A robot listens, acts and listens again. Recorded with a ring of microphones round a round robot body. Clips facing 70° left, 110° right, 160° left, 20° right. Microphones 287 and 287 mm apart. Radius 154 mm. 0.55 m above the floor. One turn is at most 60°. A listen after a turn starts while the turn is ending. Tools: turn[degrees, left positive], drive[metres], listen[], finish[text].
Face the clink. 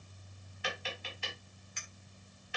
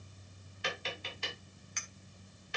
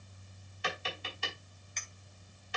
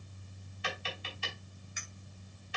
Thought: The clink: 105° right.
Action: turn[-60]
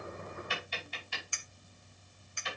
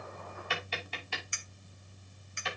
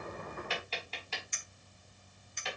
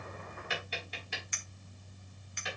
Thought: The clink is now 45° right.
Action: turn[-45]
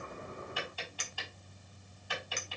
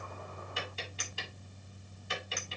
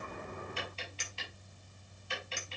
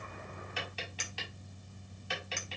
Thought: The clink is now 10° left.
Action: turn[10]
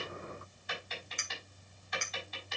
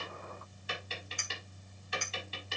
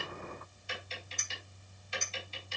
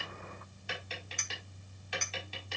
Action: finish[Facing the clink.]